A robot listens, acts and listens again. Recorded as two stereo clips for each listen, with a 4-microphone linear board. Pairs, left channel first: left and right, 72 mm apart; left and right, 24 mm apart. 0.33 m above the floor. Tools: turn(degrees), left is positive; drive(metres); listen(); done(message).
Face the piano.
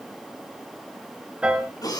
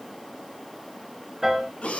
turn(degrees=-30)
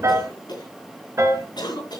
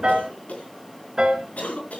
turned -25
turn(degrees=-140)
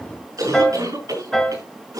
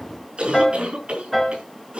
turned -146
done("Found it: a piano, straight ahead.")